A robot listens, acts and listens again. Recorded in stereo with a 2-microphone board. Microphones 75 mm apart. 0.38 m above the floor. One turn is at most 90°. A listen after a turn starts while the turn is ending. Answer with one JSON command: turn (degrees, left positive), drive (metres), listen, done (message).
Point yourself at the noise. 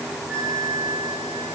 {"turn": -30}
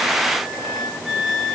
{"done": "Found it: a flute, straight ahead."}